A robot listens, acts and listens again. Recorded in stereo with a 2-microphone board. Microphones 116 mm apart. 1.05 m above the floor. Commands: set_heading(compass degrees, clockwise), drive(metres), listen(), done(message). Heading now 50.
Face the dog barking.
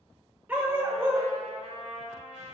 set_heading(70)
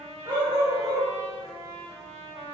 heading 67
set_heading(192)
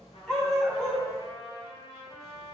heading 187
done("Found it: a dog barking, straight ahead, 2 to 4 m away.")